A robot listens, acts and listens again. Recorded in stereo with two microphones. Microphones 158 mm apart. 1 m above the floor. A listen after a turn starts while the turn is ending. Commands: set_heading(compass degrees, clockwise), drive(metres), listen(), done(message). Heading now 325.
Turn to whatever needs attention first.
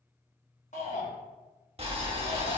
set_heading(275)
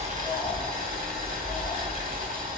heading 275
listen()
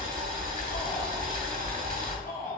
set_heading(200)
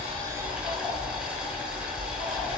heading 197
listen()
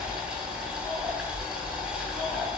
listen()
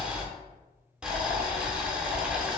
done("I heard a shout from this way, but can't make it out now.")